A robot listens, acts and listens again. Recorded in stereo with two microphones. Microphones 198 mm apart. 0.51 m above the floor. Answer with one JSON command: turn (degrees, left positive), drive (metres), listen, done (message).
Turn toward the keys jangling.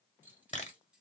{"turn": -30}
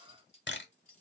{"turn": 40}
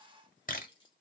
{"turn": 25}
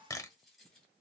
{"done": "Facing the keys jangling, 2 to 4 m away."}